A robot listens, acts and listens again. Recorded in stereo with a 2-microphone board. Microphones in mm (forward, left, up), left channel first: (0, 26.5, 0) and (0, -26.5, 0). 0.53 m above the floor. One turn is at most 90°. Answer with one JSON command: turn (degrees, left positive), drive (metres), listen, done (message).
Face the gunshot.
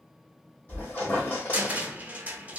{"listen": true}
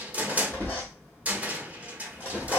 {"listen": true}
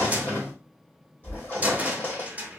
{"done": "I can't make out a gunshot, only a squeak and a cupboard door."}